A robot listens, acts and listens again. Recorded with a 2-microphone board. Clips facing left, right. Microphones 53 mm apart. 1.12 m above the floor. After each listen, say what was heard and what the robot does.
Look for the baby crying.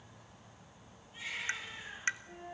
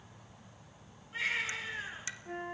Turn 90° right.
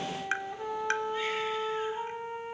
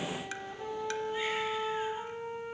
Keep listening.
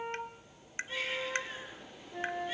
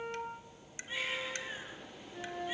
The baby crying is now 10° right. Turn 10° right.
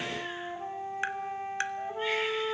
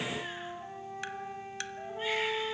Keep listening.
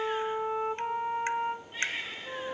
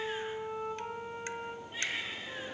Facing the baby crying.